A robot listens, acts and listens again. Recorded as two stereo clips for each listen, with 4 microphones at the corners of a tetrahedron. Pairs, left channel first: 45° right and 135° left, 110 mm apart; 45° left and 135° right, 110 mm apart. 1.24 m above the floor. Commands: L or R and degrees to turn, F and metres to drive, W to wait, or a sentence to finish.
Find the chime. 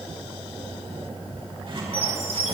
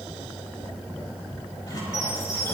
R15
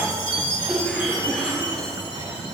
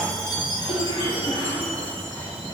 Found it: a chime, straight ahead, 2 to 4 m away.